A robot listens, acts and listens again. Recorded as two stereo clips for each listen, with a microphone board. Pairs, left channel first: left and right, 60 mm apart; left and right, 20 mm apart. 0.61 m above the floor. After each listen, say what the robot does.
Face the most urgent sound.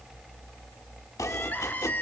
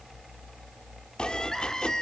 Turn 30° left.
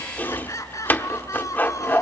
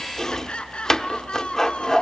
Turn 120° left.
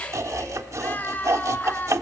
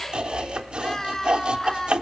Turn 30° left.
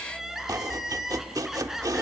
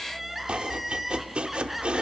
Facing the crying.